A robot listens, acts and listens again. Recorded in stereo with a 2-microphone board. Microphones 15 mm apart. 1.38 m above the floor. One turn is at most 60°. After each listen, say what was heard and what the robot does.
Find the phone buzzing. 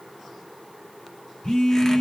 Turn 60° left.
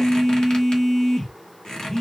So it is at 20° left. Turn 20° left.
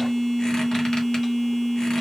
The phone buzzing is now 10° left. Turn 10° left.
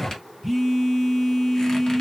Found it: a phone buzzing, straight ahead, 2 to 4 m away.